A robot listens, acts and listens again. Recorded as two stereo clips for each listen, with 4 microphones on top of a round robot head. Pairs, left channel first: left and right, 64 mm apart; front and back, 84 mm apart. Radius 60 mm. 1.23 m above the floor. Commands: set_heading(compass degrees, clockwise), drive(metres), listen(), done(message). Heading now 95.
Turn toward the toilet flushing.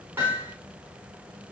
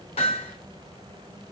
listen()
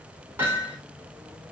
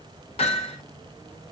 listen()
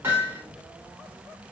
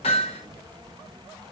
done("I can't make out a toilet flushing, only hammering.")